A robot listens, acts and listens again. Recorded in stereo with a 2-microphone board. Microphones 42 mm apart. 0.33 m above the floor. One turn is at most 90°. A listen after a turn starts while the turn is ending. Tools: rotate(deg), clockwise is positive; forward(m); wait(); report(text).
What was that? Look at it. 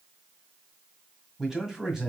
rotate(30)
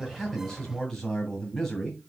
rotate(-15)
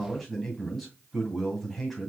report("Facing the man speaking.")